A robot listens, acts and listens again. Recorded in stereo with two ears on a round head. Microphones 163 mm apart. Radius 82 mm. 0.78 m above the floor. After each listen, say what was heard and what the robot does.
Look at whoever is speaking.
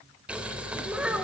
Turn 30° right.
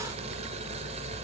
Keep listening.
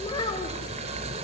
So it is at 25° left. Turn 25° left.
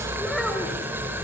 Facing the child speaking.